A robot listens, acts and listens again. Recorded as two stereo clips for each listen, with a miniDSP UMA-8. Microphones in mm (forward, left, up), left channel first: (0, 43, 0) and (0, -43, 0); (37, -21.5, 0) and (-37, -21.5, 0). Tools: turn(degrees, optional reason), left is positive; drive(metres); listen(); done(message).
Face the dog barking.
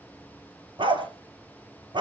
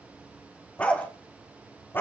turn(degrees=-60, reason="The dog barking: 60° right.")
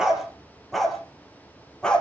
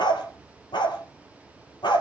turn(degrees=10, reason="The dog barking is now 10° left.")
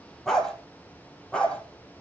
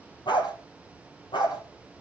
turn(degrees=10, reason="The dog barking is now 10° left.")
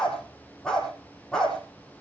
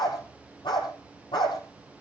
done("Found it: a dog barking, straight ahead, over 4 m away.")